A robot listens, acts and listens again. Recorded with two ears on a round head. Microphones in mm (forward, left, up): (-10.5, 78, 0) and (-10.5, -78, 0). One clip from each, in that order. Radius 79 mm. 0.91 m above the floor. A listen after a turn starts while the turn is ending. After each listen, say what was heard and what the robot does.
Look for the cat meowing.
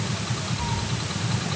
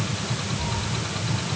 The cat meowing: about 20° left or 160° left. Turn 20° left.
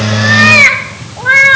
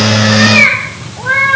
So it is at 110° left. Turn 110° left.
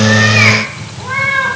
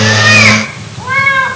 The cat meowing is now 35° right. Turn 35° right.
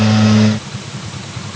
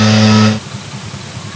Keep listening.
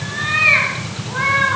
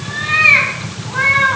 The cat meowing is now 10° right. Turn 10° right.
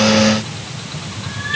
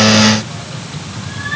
Found it: a cat meowing, straight ahead, over 4 m away.